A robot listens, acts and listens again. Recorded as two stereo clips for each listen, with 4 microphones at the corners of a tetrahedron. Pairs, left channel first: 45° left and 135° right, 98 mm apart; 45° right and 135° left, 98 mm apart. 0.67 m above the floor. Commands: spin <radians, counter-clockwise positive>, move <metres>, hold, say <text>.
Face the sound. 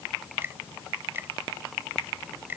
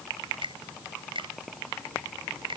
spin 2.71
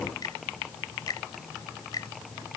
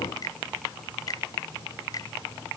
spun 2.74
say Found it: a finger snap, straight ahead.